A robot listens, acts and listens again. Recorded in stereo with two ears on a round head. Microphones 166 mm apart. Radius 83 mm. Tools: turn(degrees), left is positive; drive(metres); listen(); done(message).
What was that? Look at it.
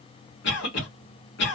turn(degrees=70)
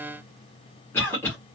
turn(degrees=15)
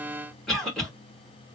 done("Found it: a cough, straight ahead.")